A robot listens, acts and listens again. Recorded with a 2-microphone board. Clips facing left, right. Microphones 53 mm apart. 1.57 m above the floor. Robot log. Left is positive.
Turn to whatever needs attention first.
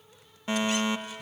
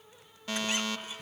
note: The fire alarm: about 25° left or 155° left.
cmd yaw +25
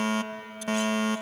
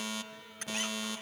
note: So it is at 130° left.
cmd yaw +130
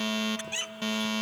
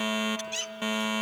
note: The fire alarm is now 15° right.
cmd yaw -15
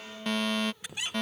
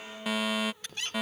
end: Facing the fire alarm.